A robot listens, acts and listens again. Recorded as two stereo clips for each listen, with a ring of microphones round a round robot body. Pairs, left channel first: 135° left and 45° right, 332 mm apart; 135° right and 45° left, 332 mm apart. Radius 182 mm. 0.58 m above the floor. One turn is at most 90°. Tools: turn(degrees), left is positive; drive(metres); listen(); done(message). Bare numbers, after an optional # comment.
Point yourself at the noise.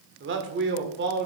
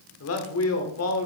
# The man speaking: 100° right.
turn(-90)
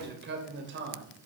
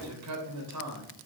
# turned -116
# The man speaking is now 10° left.
turn(10)
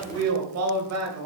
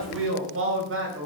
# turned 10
done("Found it: a man speaking, straight ahead, 2 to 4 m away.")